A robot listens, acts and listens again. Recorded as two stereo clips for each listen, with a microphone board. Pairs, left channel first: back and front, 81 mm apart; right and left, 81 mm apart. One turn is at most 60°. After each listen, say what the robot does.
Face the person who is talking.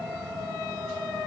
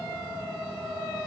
Keep listening.
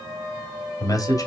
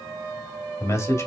Turn 60° right.
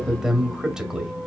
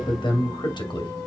Turn 60° right.
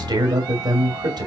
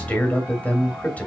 Turn 20° right.
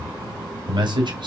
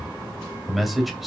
Facing the man speaking.